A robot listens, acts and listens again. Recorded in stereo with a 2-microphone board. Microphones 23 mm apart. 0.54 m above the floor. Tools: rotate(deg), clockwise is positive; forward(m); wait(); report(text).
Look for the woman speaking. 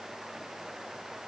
wait()
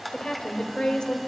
rotate(-50)
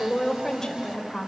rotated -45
rotate(-30)
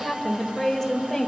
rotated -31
rotate(-15)
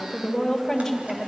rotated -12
rotate(-10)
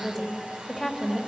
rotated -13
report("Found it: a woman speaking, straight ahead.")